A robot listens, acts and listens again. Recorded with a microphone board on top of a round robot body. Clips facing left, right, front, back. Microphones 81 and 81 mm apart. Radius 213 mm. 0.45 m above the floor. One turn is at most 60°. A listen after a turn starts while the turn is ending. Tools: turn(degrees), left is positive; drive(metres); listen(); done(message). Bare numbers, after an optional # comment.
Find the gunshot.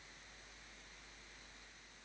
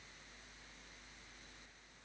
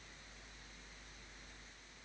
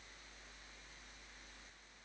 listen()
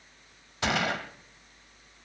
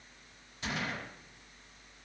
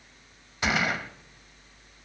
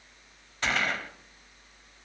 # The gunshot: 80° left.
turn(60)
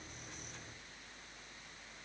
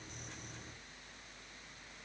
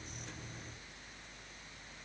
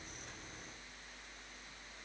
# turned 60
# Nothing new. It was at 20° left.
turn(20)
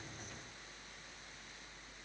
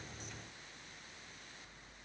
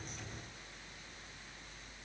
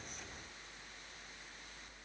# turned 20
done("I heard a gunshot from this way, but can't make it out now.")